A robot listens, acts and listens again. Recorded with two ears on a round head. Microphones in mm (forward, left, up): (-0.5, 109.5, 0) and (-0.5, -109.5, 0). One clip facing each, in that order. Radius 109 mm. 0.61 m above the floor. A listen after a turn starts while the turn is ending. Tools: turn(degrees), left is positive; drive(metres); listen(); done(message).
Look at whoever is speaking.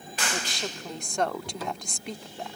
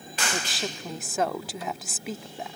turn(degrees=-30)
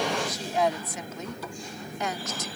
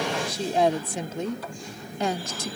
turn(degrees=-150)
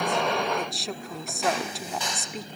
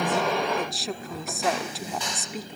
done("Facing the woman speaking.")